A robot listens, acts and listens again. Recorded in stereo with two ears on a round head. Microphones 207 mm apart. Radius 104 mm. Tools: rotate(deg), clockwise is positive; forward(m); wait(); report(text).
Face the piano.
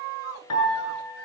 rotate(-90)
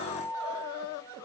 rotate(10)
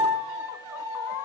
report("Found it: a piano, straight ahead, over 4 m away.")